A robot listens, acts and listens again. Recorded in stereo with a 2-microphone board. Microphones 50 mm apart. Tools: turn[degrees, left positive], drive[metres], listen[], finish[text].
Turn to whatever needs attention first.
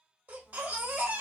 Thought: The baby crying: about 40° right or 140° right.
Action: turn[-40]
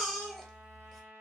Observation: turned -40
Action: finish[Facing the baby crying, under 1 m away.]